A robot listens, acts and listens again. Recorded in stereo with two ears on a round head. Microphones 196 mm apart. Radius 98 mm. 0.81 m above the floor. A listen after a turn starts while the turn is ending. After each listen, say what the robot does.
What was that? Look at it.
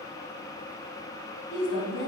Turn 60° left.
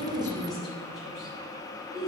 Facing the woman speaking.